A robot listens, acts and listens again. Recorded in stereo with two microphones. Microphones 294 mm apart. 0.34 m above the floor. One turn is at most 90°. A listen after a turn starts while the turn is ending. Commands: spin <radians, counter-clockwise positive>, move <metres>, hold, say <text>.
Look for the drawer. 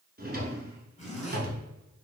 spin -0.61
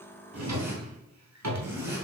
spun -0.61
spin -1.57
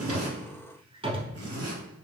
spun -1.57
spin -0.35
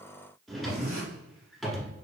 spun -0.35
say Found it: a drawer, straight ahead, 1 to 2 m away.